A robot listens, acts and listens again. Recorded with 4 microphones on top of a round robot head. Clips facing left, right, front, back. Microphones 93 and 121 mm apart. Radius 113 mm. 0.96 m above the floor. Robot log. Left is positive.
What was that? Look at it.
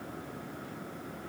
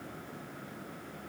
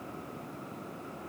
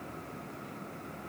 cmd idle
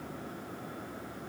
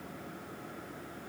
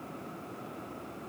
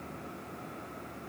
cmd idle
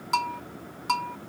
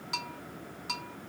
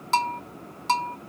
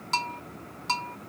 note: The bell: 35° left.
cmd yaw +35
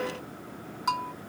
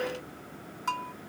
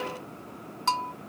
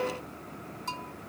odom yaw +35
note: The bell is now 10° left.
cmd yaw +10
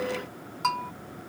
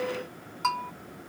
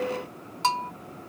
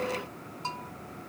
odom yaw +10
end: Facing the bell.